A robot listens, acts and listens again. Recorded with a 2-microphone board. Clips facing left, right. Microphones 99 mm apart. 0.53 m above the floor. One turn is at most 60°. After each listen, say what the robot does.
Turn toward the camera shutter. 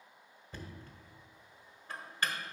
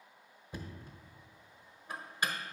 Keep listening.
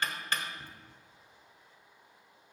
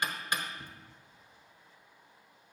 Keep listening.
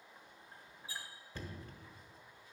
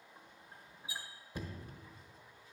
I can't make out a camera shutter, only knocking.